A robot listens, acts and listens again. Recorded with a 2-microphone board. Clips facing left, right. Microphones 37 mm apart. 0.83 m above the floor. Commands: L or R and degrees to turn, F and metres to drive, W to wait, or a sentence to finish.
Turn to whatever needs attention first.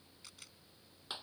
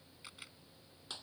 W
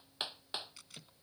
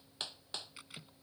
W
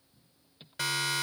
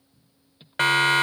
R45
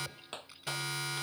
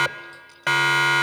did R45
R90
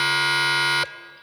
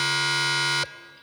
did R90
L15
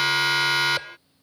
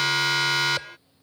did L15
Found it: a siren, straight ahead.